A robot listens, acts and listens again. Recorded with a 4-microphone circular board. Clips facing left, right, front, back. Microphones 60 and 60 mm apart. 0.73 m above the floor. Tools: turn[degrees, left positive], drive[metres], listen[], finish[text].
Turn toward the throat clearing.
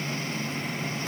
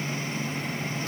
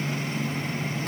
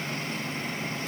Action: listen[]
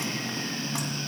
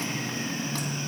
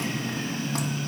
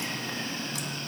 Action: listen[]
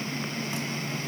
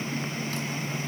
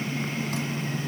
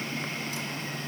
Action: finish[I can't make out throat clearing to turn to.]